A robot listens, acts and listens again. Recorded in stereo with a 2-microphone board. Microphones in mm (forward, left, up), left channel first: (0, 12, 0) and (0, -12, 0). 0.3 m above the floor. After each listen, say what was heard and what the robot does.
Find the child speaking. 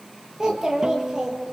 The child speaking: about 35° right or 145° right. Turn 35° right.
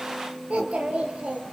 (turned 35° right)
So it is at 110° right. Turn 110° right.
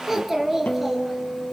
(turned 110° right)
The child speaking is now 10° right. Turn 10° right.
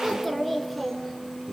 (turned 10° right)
The child speaking is now 10° left. Turn 10° left.
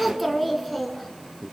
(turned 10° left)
Found it: a child speaking, straight ahead, 2 to 4 m away.